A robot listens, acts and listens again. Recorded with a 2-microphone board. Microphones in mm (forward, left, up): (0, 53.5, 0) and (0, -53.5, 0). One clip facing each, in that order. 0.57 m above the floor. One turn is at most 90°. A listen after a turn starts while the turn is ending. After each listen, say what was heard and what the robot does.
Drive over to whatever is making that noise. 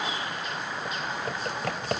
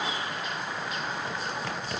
The typing on a keyboard: about 50° left or 130° left. Turn 50° left.
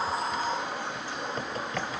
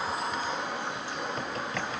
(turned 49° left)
Drive 1.0 m forward.
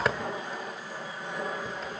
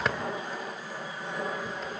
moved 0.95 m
Drive 1.0 m forward.
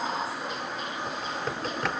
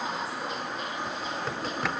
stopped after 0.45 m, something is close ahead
Arrived at the typing on a keyboard, straight ahead.